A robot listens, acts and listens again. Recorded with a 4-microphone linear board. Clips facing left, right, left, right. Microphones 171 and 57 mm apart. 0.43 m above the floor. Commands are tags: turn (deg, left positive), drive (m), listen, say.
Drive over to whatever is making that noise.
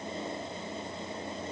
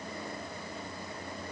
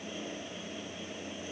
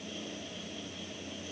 <listen/>
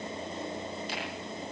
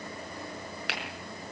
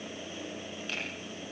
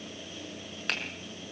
<turn deg="-90"/>
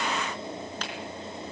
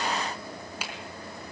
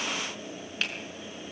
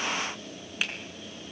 <turn deg="-10"/>
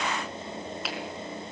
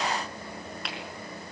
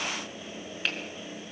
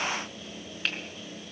<drive m="1.0"/>
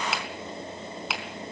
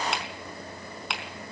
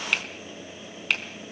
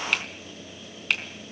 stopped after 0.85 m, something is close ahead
<say>Blocked. The finger snap is further on, straight ahead.</say>